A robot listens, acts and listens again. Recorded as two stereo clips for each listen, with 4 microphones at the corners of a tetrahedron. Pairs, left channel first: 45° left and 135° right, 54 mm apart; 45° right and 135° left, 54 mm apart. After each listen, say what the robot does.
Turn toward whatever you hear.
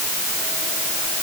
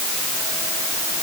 Keep listening.
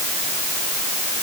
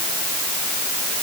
Keep listening.
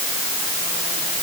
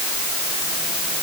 I can't make out anything.